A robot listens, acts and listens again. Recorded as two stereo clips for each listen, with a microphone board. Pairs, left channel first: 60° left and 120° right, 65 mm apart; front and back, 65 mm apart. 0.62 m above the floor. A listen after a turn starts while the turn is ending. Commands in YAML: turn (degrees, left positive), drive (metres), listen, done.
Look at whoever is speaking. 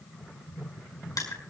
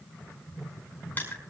listen: true
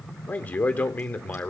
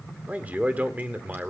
turn: 120
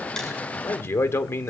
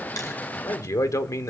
turn: 20
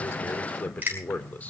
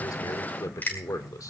done: "Found it: a man speaking, straight ahead."